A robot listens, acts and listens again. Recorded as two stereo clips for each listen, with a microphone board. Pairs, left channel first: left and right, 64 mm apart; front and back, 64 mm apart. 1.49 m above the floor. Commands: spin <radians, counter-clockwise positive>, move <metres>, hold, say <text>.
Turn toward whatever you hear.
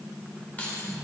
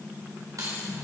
spin 2.71
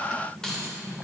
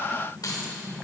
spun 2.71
spin 0.17
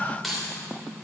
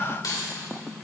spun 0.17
say Found it: keys jangling, straight ahead.